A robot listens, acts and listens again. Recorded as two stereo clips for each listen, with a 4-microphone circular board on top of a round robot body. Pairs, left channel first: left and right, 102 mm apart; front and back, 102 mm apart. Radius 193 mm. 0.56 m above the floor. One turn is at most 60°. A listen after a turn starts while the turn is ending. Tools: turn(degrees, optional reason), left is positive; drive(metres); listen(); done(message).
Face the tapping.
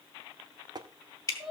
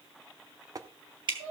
turn(degrees=-60, reason="The tapping: 130° right.")
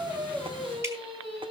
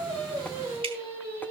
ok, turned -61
turn(degrees=-60, reason="Nothing new. It was at 70° right.")
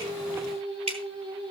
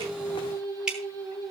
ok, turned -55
turn(degrees=-15, reason="Nothing new. It was at 15° right.")
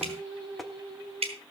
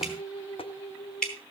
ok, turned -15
done("Facing where the tapping came from. I can't hear it now.")